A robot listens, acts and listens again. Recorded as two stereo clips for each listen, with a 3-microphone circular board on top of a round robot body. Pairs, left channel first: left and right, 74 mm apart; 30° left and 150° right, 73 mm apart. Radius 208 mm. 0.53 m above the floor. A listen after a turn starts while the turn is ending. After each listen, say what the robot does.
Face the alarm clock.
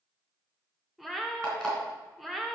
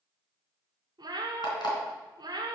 Turn 10° left.
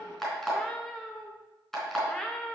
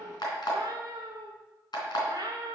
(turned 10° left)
Facing the alarm clock.